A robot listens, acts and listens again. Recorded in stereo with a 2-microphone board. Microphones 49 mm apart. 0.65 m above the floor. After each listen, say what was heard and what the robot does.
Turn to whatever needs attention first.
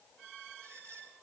Keep listening.
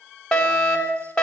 Turn 30° left.
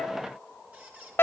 So it is at 135° left. Turn 135° left.
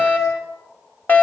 The fire alarm is now 35° left. Turn 35° left.
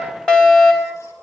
The fire alarm is now 15° left. Turn 15° left.
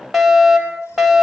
Facing the fire alarm, over 4 m away.